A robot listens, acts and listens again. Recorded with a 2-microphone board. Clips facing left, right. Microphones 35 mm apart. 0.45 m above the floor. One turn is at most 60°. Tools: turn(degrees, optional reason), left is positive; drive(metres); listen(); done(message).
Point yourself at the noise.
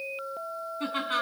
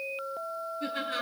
turn(degrees=60, reason="The laughter: about 70° left or 110° left.")
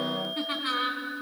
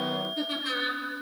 turn(degrees=35, reason="So it is at 35° left.")
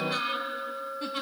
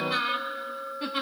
turn(degrees=-20, reason="The laughter is now 20° right.")
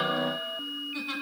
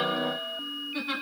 turn(degrees=-15, reason="The laughter is now 15° right.")
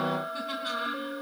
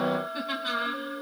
turn(degrees=-15, reason="The laughter is now 15° right.")
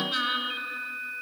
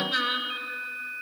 done("Facing the laughter.")